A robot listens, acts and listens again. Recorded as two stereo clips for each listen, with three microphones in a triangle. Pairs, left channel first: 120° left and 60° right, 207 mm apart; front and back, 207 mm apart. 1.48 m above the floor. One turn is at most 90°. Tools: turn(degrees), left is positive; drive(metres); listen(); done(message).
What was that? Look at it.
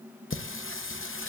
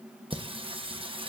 turn(degrees=90)
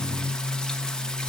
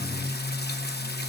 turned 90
turn(degrees=35)
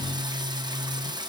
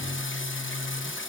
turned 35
turn(degrees=10)
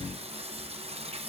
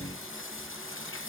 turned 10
done("Found it: singing, straight ahead.")